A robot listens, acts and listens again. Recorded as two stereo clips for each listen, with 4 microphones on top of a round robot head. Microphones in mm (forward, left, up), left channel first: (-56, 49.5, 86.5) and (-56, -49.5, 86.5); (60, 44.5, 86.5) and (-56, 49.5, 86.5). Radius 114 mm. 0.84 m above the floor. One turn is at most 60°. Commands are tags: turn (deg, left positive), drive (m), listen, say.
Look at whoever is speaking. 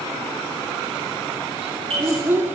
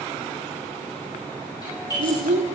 <turn deg="-60"/>
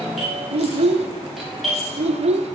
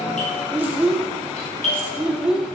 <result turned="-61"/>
<turn deg="-60"/>
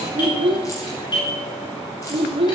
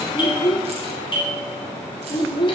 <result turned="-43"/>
<turn deg="-55"/>
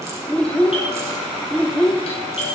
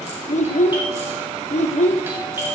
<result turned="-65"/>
<turn deg="10"/>
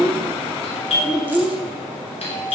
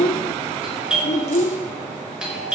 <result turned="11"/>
<say>Facing the child speaking.</say>